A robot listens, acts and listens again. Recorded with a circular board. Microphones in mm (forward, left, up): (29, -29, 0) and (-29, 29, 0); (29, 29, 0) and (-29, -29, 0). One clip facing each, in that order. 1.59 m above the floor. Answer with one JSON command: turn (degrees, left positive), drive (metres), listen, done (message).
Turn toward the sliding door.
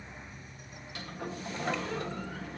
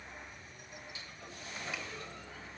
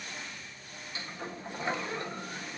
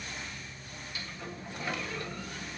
{"turn": -20}
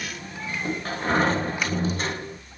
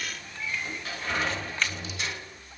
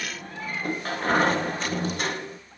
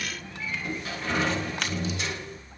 {"done": "Found it: a sliding door, straight ahead."}